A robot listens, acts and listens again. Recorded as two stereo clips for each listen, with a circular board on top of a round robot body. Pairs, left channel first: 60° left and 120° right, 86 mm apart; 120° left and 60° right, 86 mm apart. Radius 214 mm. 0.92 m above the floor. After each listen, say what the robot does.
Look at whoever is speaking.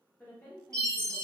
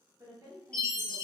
Found it: a woman speaking, straight ahead.